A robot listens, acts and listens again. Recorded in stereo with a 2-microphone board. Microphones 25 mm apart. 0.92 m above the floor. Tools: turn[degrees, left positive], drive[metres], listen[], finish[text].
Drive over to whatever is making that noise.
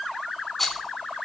Action: turn[30]
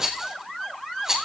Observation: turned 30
Thought: So it is at 20° right.
Action: turn[-20]
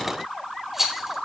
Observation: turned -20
Thought: The rattle is now 10° right.
Action: turn[-10]
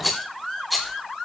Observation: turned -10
Action: drive[1.0]
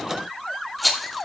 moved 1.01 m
Action: drive[1.0]
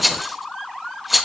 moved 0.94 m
Action: drive[1.0]
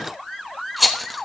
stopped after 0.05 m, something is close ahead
Action: finish[Arrived at the rattle, straight ahead.]